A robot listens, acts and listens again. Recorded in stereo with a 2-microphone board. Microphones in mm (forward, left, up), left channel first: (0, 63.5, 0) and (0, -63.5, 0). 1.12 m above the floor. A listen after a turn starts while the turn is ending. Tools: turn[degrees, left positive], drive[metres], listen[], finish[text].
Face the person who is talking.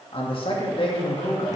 Thought: The man speaking: about 45° left or 135° left.
Action: turn[45]
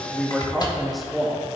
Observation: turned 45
Action: finish[Found it: a man speaking, straight ahead.]